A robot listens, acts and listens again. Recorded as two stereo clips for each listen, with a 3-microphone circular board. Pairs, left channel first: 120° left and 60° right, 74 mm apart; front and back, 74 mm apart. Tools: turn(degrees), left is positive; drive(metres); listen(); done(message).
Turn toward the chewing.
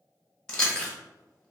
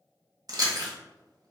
turn(degrees=-160)
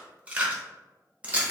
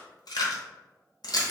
turn(degrees=10)
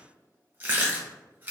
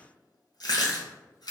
done("Found it: chewing, straight ahead.")